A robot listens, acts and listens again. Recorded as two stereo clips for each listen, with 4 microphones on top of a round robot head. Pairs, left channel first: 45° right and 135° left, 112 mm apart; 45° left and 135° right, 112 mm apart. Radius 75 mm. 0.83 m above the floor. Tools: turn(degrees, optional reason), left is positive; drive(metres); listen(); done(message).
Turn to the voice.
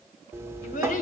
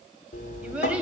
turn(degrees=-55, reason="The child speaking: 55° right.")
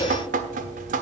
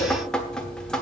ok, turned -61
listen()
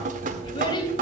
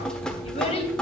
turn(degrees=10, reason="The child speaking is now 10° left.")
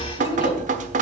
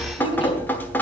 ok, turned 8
done("Found it: a child speaking, straight ahead, 2 to 4 m away.")